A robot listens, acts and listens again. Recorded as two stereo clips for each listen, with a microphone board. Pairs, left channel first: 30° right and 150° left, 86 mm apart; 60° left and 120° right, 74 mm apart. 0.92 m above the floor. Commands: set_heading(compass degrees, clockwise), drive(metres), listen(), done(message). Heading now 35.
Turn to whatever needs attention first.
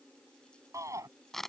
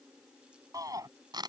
set_heading(190)
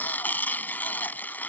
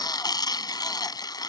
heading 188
listen()
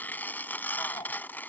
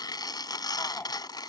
listen()
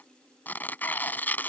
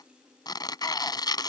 done("I heard a shout from this way, but can't make it out now.")